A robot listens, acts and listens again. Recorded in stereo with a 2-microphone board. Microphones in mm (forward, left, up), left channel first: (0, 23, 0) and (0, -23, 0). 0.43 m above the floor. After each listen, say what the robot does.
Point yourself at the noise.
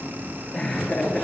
Turn 20° left.
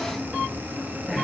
Found it: laughter, straight ahead.